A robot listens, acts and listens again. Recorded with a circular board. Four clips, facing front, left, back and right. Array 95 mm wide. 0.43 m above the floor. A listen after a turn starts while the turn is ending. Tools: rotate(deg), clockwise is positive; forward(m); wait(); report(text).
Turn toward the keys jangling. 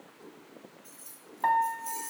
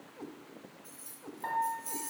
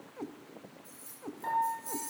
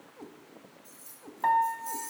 rotate(-15)
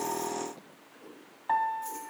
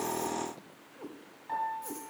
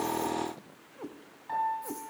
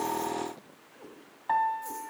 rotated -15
wait()
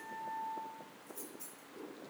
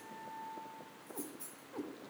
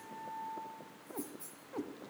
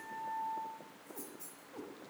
rotate(-10)
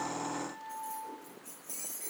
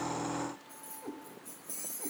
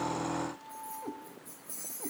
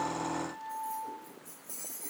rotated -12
report("Found it: keys jangling, straight ahead, over 4 m away.")